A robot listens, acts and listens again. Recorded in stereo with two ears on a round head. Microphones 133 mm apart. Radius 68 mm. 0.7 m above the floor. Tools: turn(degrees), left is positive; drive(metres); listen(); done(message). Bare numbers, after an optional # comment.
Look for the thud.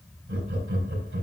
listen()
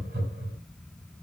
listen()
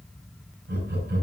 done("I can't make out a thud, only laughter.")